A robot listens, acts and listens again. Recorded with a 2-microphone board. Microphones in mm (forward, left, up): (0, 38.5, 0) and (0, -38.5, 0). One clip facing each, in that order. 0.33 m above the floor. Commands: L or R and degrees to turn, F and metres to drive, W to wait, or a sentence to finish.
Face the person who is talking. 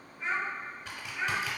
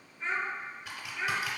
L30
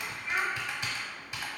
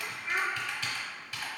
R20
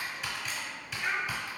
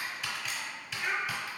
Found it: a child speaking, straight ahead.